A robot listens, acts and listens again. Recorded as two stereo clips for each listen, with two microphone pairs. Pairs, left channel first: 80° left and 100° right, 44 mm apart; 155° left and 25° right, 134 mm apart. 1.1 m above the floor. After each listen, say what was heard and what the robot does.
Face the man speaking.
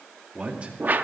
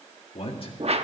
The man speaking: 160° right. Turn 160° right.
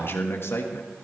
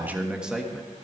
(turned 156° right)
The man speaking is now 70° left. Turn 70° left.
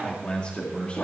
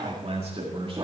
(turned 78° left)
The man speaking is now 25° left. Turn 25° left.
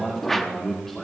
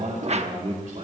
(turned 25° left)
Facing the man speaking.